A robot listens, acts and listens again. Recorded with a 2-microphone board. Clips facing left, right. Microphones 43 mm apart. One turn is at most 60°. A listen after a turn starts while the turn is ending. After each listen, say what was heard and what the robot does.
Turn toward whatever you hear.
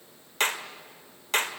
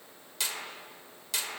The clap: about 45° left or 135° left. Turn 45° left.
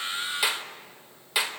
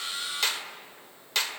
So it is at 15° left. Turn 15° left.
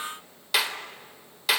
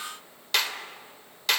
Facing the clap, 1 to 2 m away.